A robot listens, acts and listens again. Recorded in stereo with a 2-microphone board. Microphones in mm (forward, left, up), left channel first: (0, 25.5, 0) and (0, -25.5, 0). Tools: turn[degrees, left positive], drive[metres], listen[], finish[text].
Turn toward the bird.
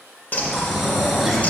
Thought: The bird: about 35° left or 145° left.
Action: turn[35]
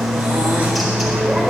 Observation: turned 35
Action: finish[Found it: a bird, straight ahead.]